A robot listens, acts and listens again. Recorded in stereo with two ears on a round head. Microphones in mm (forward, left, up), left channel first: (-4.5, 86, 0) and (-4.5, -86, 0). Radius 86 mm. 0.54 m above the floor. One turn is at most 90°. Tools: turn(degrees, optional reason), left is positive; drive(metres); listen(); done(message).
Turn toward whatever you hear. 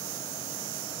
listen()
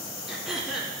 turn(degrees=30)
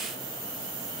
listen()
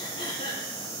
turn(degrees=90, reason="So it is at 150° left.")
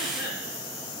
turn(degrees=60, reason="Nothing new. It was at 60° left.")
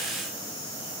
listen()
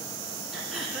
done("Facing the throat clearing.")